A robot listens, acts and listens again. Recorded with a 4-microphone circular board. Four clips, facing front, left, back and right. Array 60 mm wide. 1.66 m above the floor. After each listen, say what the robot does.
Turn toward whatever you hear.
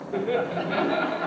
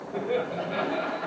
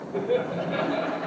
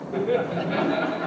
Turn 20° right.
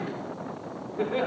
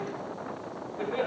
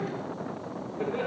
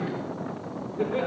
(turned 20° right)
Found it: laughter, straight ahead, over 4 m away.